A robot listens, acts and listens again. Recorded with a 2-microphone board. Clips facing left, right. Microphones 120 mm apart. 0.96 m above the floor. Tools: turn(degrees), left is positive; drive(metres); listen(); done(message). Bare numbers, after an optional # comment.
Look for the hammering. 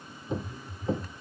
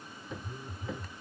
# The hammering: about 35° left or 145° left.
turn(35)
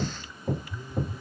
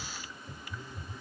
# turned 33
# So it is at 115° left.
turn(115)
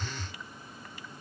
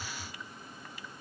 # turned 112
listen()
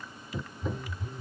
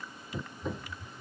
done("Found it: hammering, straight ahead.")